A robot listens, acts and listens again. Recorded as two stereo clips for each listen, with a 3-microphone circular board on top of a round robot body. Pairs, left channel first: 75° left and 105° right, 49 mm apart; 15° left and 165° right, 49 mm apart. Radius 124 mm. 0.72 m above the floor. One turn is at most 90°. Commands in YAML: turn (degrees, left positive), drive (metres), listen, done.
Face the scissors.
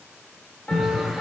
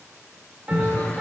turn: -20
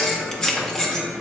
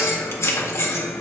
done: "Found it: scissors, straight ahead, 1 to 2 m away."